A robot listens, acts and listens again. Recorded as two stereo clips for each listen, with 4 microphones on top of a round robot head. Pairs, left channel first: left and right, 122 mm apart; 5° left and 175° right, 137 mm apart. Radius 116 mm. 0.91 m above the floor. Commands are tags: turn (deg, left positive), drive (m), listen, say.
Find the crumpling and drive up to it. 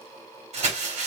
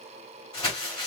<turn deg="-65"/>
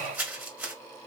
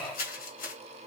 <turn deg="-15"/>
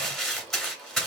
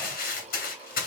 <drive m="1.0"/>
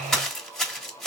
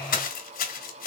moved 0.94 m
<drive m="1.0"/>
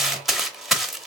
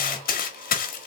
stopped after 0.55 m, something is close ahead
<say>Arrived at the crumpling, straight ahead.</say>